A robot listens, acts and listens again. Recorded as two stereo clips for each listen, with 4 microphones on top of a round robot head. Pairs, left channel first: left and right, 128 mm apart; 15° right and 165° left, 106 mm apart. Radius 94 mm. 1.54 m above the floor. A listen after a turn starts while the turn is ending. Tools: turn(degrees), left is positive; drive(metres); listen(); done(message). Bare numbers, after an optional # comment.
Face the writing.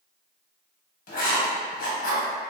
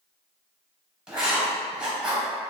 # The writing: 85° left.
turn(85)
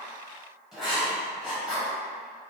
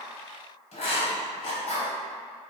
done("Facing the writing, 1 to 2 m away.")